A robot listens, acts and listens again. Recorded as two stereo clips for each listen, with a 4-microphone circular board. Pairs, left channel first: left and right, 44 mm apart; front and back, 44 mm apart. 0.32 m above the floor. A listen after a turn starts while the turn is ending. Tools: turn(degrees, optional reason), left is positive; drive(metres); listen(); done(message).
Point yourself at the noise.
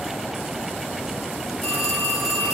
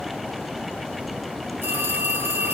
turn(degrees=175, reason="The phone ringing: 175° left.")
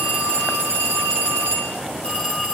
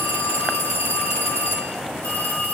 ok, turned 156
turn(degrees=20, reason="The phone ringing is now 20° left.")
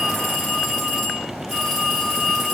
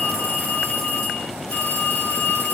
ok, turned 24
turn(degrees=-10, reason="The phone ringing is now 10° right.")
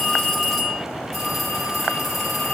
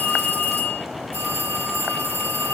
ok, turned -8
done("Found it: a phone ringing, straight ahead.")